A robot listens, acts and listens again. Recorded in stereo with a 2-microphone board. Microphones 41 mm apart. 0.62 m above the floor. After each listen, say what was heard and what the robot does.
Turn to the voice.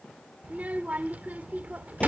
The child speaking: about 40° right or 140° right. Turn 40° right.
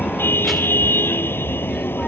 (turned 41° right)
Keep listening.
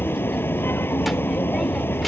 Keep listening.
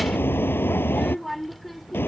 Facing the child speaking.